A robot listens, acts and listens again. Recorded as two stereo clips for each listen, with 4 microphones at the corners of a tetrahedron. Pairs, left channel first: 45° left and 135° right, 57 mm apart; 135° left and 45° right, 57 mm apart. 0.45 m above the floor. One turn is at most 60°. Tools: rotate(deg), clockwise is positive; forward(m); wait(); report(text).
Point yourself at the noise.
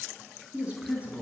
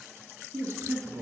rotate(60)
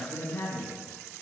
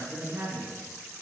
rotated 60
rotate(15)
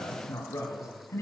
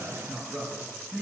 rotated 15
rotate(-20)
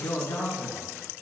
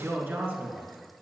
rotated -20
report("Facing the man speaking, 2 to 4 m away.")